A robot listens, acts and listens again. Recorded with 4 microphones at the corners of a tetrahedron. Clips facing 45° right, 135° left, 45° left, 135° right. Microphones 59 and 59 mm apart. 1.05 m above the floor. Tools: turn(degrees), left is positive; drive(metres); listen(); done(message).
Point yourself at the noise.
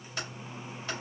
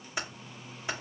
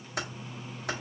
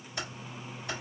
turn(degrees=60)
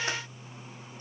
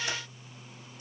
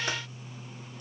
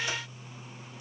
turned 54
turn(degrees=10)
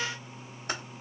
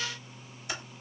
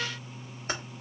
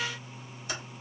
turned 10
done("Facing the typing on a keyboard.")